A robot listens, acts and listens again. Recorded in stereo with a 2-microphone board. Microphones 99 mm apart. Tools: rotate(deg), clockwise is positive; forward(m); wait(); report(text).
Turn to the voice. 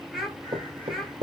rotate(-30)
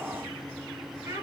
rotate(30)
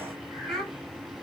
report("Facing the child speaking, 2 to 4 m away.")